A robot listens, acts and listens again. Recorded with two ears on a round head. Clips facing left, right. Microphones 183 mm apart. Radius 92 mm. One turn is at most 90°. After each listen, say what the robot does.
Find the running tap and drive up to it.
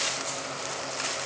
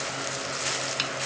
Keep listening.
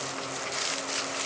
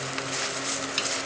Keep listening.
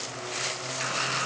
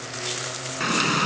Turn 70° right.
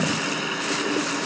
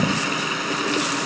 Drive 1.0 m forward.
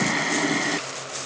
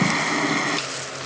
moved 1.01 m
Drive 1.0 m forward.
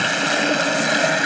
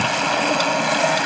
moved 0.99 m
Turn 20° left.
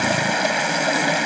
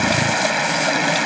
Drive 1.0 m forward.
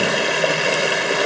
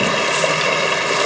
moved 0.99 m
Drive 1.0 m forward.
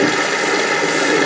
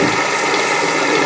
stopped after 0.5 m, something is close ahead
Turn 10° left.
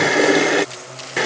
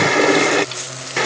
Arrived at the running tap, straight ahead.